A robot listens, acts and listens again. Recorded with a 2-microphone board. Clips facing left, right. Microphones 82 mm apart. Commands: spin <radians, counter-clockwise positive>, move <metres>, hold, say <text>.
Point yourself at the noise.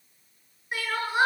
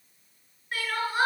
spin 0.35
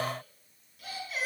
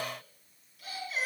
say Found it: crying, straight ahead, over 4 m away.